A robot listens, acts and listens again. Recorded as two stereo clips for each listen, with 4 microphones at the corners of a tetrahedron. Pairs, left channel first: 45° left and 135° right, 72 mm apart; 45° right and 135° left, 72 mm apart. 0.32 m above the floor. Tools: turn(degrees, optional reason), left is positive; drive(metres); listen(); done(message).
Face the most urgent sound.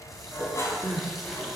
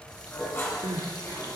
turn(degrees=140, reason="The crying: 140° left.")
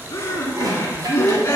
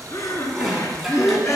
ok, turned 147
done("Found it: crying, straight ahead.")